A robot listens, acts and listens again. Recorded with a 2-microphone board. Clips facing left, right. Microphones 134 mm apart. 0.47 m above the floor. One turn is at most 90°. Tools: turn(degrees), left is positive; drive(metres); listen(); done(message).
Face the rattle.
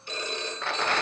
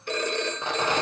turn(degrees=-20)
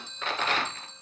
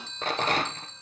turn(degrees=-90)
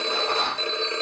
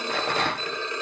turn(degrees=-80)
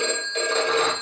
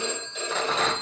listen()
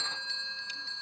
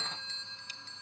listen()
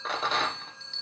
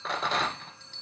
done("Found it: a rattle, straight ahead.")